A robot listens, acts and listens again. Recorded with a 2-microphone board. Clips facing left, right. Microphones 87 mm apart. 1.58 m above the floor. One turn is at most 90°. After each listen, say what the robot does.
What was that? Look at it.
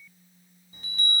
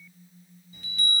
Turn 30° left.
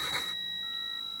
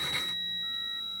Turn 90° left.
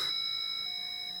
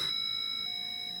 Turn 25° left.
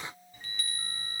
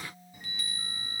Facing the chime, 1 to 2 m away.